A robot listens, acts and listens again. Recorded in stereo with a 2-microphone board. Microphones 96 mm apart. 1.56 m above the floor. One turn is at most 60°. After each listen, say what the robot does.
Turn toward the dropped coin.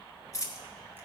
Turn 35° left.
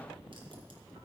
Keep listening.
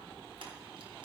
I heard a dropped coin, but can't make it out now. It was about straight ahead or 110° left.